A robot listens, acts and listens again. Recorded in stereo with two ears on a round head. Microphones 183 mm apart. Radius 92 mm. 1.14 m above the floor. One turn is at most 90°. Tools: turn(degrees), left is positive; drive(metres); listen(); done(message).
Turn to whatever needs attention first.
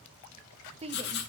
turn(degrees=-30)
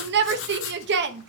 turn(degrees=-90)
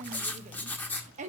turn(degrees=-35)
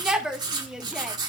done("Found it: a shout, straight ahead.")